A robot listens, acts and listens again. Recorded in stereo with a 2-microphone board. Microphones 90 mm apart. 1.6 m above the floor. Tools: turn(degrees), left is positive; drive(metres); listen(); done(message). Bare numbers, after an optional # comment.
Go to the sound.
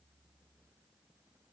listen()
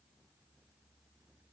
listen()
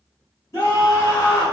# The scream: about 40° left or 140° left.
turn(40)
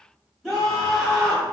drive(1.0)
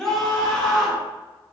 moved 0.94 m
drive(1.0)
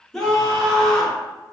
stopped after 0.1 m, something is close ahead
done("Arrived at the scream, straight ahead.")